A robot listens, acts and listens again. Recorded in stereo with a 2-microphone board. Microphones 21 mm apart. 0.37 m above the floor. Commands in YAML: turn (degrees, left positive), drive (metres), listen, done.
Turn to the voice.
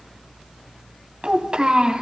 turn: -45
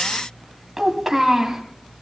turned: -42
turn: -10
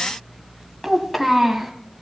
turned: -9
done: "Found it: a child speaking, straight ahead."